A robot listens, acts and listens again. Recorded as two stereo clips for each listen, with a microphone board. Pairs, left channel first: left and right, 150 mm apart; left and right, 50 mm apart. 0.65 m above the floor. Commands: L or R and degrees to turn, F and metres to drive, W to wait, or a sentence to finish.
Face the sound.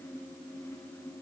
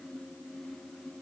W
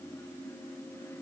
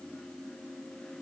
W
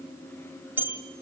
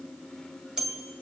R30
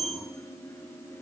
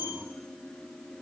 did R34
R135
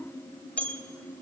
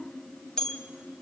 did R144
L10
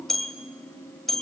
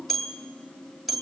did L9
Facing the bell.